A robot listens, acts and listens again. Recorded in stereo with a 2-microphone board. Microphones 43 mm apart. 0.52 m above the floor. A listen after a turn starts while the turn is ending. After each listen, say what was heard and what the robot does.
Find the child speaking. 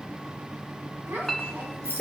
The child speaking: about 65° right or 115° right. Turn 65° right.
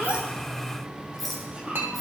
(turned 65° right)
So it is at 25° right. Turn 25° right.
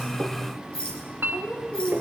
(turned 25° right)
The child speaking is now 20° left. Turn 20° left.
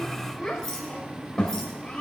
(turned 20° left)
The child speaking is now 20° left. Turn 20° left.
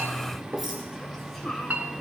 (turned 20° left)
Facing the child speaking, 2 to 4 m away.